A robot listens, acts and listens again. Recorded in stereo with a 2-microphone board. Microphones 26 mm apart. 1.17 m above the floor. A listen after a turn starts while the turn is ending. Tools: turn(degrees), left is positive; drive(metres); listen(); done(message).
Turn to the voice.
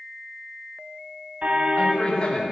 turn(degrees=40)
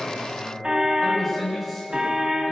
done("Facing the man speaking.")